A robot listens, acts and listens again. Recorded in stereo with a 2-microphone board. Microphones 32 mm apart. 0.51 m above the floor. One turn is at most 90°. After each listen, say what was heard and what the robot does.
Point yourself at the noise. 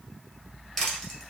Turn 30° left.
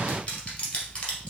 So it is at 150° left. Turn 90° left.
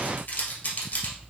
The crushing is now 65° left. Turn 65° left.
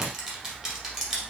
Found it: crushing, straight ahead.